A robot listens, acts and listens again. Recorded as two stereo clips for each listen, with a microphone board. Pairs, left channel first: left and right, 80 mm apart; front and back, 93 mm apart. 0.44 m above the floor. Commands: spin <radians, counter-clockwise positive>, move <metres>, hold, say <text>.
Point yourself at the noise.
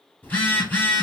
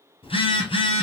spin 0.35
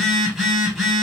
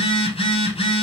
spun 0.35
say Facing the phone buzzing.